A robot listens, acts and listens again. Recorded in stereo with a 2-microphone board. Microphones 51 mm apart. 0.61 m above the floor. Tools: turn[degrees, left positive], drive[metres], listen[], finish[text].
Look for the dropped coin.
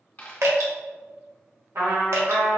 Thought: The dropped coin: about 40° left or 140° left.
Action: turn[40]
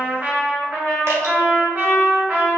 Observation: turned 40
Action: listen[]
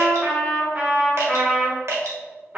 Action: finish[I heard a dropped coin, but can't make it out now. It was about straight ahead or 100° left.]